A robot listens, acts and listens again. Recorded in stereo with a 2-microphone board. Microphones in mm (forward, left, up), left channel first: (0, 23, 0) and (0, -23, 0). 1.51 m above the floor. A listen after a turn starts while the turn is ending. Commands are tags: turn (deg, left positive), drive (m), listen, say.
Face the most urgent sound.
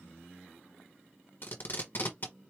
<listen/>
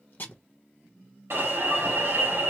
<turn deg="-65"/>
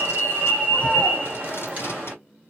<turn deg="-35"/>
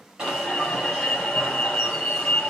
<turn deg="15"/>
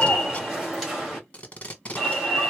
<say>Found it: an alarm, straight ahead, 2 to 4 m away.</say>